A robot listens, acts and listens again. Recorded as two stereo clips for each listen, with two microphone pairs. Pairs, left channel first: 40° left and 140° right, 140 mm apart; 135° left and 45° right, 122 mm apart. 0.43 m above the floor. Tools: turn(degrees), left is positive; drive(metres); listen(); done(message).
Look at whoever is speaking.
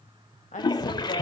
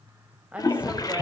turn(degrees=35)
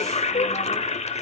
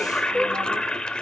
listen()
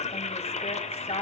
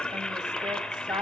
done("Facing the woman speaking, 1 to 2 m away.")